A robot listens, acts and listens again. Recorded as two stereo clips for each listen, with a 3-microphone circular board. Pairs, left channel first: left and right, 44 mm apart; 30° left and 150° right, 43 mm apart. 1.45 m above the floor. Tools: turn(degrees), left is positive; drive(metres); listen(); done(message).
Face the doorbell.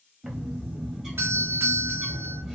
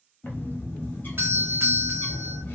turn(degrees=-120)
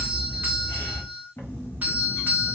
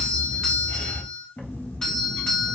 turn(degrees=-40)
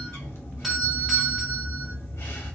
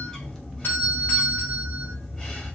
done("Found it: a doorbell, straight ahead, under 1 m away.")